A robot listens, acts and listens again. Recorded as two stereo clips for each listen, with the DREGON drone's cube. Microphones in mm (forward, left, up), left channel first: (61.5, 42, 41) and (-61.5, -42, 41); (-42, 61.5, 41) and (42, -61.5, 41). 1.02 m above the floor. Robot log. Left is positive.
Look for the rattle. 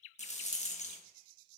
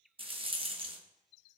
end: Facing the rattle.